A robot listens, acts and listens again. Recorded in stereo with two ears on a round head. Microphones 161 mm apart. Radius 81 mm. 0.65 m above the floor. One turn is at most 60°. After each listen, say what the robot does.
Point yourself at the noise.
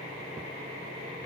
Keep listening.
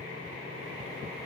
Keep listening.
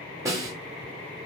Turn 20° right.
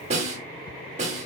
Turn 60° right.
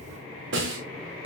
Turn 60° right.
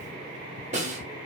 Turn 40° right.
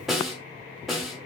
Found it: a snare drum, straight ahead.